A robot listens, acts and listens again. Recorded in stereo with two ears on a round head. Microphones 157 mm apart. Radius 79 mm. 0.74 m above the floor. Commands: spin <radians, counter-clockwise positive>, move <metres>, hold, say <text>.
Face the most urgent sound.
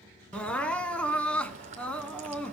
spin 0.52
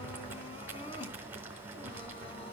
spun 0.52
spin 2.44
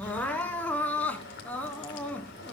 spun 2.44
spin 0.17
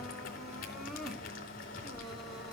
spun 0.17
say Found it: crying, straight ahead.